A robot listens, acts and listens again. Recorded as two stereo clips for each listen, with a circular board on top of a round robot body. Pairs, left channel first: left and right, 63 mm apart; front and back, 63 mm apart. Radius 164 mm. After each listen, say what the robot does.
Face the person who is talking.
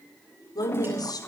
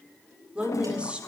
Turn 105° left.
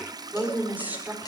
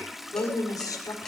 Turn 25° right.
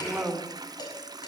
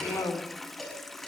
Turn 20° right.
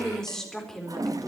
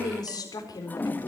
Found it: a woman speaking, straight ahead, over 4 m away.